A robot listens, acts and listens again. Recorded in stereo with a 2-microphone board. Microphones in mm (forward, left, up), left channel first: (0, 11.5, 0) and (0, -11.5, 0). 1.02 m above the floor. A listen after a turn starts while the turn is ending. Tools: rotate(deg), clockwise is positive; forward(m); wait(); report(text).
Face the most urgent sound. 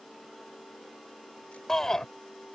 rotate(-15)
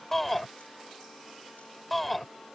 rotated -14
report("Facing the shout.")